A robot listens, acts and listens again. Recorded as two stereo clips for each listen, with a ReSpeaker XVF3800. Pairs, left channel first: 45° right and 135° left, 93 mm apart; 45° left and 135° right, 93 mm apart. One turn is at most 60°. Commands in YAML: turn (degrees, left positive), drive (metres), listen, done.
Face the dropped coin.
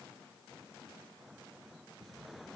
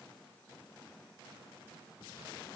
listen: true
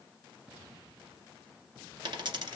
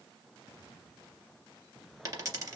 turn: 60
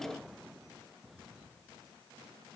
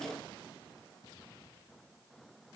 turn: 60
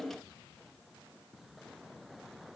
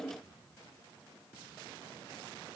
turn: 55
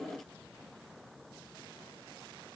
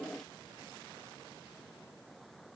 done: "Facing where the dropped coin came from. I can't hear it now."